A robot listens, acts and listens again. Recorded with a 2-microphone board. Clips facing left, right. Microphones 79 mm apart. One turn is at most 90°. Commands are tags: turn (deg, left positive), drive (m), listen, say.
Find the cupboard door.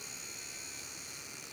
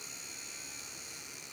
<listen/>
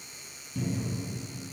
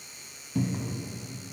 <turn deg="-55"/>
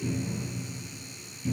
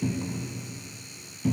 <turn deg="-65"/>
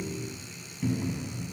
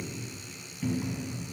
<say>Facing the cupboard door, 1 to 2 m away.</say>